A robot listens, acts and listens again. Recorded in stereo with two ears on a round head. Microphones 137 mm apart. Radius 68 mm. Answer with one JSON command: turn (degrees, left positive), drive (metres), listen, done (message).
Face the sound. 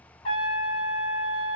{"turn": 35}
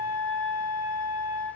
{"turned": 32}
{"done": "Found it: a trumpet, straight ahead, 1 to 2 m away."}